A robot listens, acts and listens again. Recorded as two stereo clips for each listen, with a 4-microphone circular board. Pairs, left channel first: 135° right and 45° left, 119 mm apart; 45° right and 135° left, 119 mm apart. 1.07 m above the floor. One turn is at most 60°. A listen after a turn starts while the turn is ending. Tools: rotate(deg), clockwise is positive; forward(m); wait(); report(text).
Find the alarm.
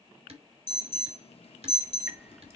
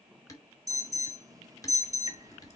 rotate(60)
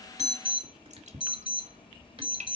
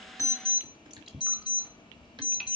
rotate(60)
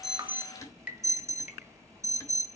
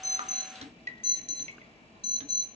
rotate(15)
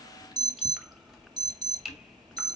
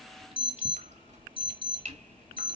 report("Facing the alarm, 1 to 2 m away.")